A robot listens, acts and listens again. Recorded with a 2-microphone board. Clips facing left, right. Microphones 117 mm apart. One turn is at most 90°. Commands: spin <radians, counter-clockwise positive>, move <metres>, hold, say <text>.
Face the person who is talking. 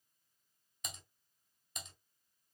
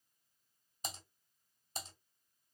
hold
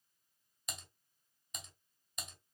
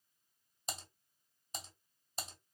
hold
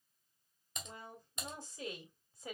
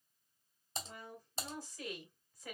spin 0.44
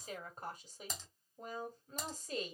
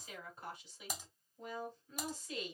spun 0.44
spin 1.57
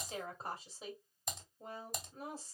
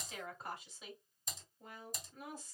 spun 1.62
spin 0.61
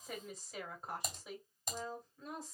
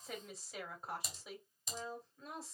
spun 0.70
say Facing the woman speaking.